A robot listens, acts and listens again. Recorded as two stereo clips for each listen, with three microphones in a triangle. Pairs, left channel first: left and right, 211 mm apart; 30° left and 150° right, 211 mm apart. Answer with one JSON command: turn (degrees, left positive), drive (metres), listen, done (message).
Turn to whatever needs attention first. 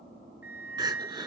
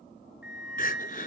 {"turn": -20}
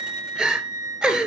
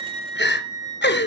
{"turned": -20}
{"done": "Found it: crying, straight ahead, 1 to 2 m away."}